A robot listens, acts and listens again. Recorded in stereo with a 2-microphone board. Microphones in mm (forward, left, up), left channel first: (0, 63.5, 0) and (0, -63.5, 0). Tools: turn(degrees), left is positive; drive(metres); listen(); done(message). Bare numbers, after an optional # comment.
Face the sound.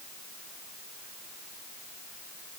listen()
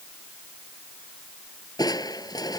# The crushing: about 30° left or 150° left.
turn(30)
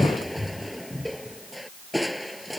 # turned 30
done("Found it: crushing, straight ahead.")